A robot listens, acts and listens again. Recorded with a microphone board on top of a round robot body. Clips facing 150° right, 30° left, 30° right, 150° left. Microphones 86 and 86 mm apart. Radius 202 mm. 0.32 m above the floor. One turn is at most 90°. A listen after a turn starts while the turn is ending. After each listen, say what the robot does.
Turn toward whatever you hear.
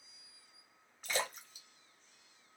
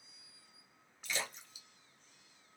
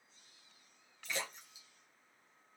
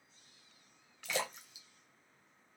Turn 90° left.
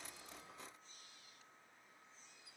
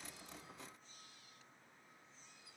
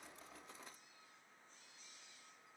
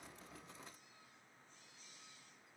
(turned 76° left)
Turn 85° left.
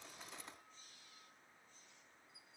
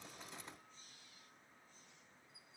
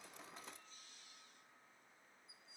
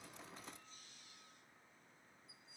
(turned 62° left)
Turn 25° left.
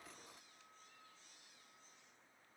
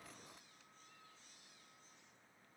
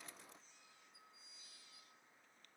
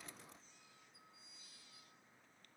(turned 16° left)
Turn 10° left.
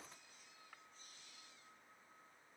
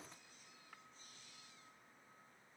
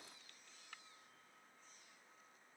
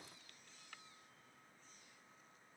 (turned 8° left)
Facing where the splash came from. I can't hear it now.